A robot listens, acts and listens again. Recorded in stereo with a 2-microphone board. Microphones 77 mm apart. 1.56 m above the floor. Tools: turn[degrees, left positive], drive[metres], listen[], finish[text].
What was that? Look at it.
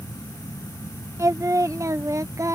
Thought: The singing: about 40° right or 140° right.
Action: turn[-40]
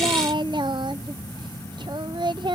Thought: So it is at 95° right.
Action: turn[-95]
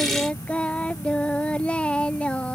Thought: The singing is now 15° left.
Action: turn[15]
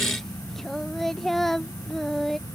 Action: finish[Found it: singing, straight ahead.]